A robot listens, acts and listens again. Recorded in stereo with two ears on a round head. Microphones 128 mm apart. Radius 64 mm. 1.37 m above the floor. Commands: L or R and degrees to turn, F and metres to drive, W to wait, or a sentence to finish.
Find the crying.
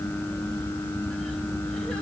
W
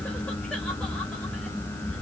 W
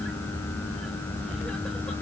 I can't make out crying to turn to.